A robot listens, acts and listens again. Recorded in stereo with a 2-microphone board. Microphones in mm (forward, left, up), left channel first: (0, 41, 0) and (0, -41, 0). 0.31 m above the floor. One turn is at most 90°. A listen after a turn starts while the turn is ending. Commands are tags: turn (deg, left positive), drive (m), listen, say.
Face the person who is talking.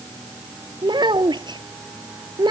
<turn deg="-70"/>
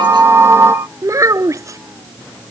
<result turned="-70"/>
<turn deg="-40"/>
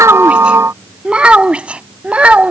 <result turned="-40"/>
<turn deg="-15"/>
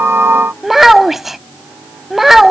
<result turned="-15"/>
<say>Facing the child speaking.</say>